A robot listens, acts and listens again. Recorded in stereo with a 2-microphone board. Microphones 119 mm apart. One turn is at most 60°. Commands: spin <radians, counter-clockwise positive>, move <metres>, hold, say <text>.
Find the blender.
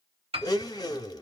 spin 0.61
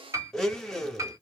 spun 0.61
say Facing the blender, under 1 m away.